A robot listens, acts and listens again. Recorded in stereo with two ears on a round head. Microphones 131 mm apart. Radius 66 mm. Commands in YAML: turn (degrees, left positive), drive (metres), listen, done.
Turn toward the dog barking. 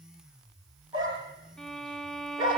turn: -30
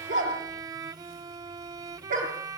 turn: -120
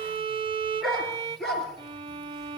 done: "Facing the dog barking."